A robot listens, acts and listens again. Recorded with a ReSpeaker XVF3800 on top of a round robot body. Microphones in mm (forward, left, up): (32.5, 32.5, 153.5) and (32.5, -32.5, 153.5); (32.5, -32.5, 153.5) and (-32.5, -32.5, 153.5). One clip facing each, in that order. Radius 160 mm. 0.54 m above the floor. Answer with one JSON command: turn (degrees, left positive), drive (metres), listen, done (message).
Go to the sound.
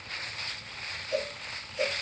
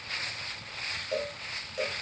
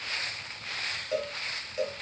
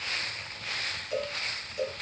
{"turn": -60}
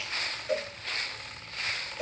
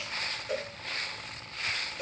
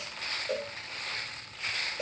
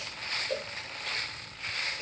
{"drive": 1.0}
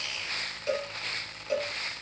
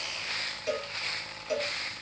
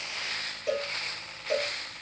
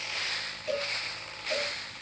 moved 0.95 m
{"turn": -10}
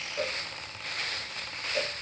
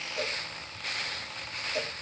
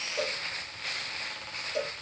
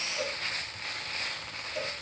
{"drive": 1.0}
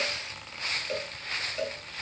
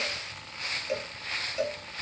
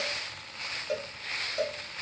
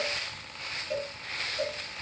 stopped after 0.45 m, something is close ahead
{"turn": -10}
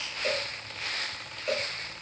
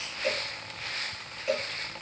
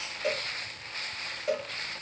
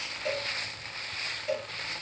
{"done": "Arrived at the cowbell, straight ahead."}